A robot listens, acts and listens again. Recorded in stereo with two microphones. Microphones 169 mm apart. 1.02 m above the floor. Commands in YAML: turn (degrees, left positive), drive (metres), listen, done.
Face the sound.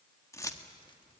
turn: 20
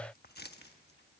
turn: 105
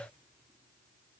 listen: true
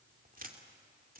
turn: -55
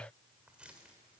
done: "Found it: keys jangling, straight ahead, 2 to 4 m away."